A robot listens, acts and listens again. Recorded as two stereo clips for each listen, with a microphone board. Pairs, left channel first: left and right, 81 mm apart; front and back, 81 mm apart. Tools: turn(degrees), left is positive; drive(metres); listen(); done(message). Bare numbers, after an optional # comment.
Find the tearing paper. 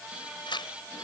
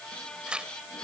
# The tearing paper: 100° left.
turn(100)
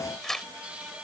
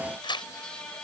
done("Found it: tearing paper, straight ahead.")